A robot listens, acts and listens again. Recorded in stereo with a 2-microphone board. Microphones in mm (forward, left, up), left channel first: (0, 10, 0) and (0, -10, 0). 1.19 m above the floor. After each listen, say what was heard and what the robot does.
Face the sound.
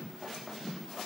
Keep listening.
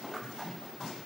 Keep listening.
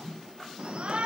The shout: about 60° right or 120° right. Turn 60° right.
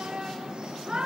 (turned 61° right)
So it is at 50° right. Turn 50° right.
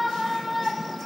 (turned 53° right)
Facing the shout, 1 to 2 m away.